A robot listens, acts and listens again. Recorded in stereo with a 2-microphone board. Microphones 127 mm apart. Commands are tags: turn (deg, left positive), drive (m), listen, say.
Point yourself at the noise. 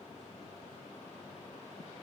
<listen/>
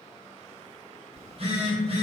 <turn deg="-45"/>
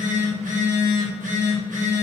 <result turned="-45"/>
<turn deg="-90"/>
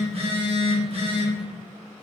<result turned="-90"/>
<turn deg="-50"/>
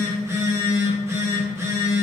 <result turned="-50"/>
<turn deg="-20"/>
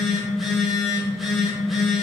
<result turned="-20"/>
<say>Found it: a phone buzzing, straight ahead, under 1 m away.</say>